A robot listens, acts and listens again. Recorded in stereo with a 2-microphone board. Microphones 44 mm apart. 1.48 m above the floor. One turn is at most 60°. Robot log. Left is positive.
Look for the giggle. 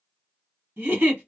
note: The giggle: about 50° right or 130° right.
cmd yaw -50
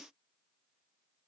cmd idle
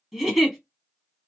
end: Facing the giggle, 1 to 2 m away.